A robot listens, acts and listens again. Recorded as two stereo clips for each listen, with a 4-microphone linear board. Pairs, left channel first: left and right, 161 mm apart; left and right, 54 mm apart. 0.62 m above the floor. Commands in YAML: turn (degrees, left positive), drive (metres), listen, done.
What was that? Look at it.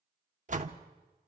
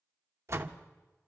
turn: -55
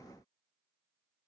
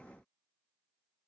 listen: true
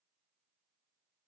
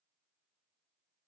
done: "I heard a door slam, but can't make it out now. It was about straight ahead or 70° right."